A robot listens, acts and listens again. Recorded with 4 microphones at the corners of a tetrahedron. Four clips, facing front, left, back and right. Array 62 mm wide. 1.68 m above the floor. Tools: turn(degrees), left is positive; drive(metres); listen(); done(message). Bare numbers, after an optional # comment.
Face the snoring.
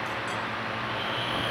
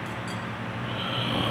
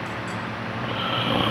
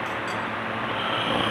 # The snoring: 145° right.
turn(-145)
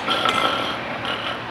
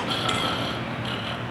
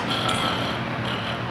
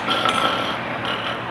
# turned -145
# The snoring is now 45° right.
turn(-45)
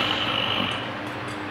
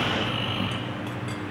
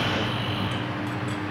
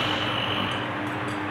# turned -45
done("Facing the snoring.")